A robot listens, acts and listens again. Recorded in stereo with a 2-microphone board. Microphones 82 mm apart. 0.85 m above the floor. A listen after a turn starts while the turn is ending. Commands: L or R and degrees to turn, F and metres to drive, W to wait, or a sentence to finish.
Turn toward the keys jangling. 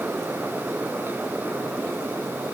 W
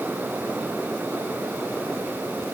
W
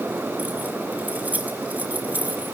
R20
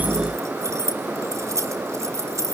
R140
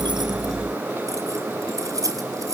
R50
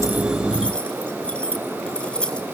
L15
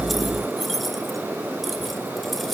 Found it: keys jangling, straight ahead.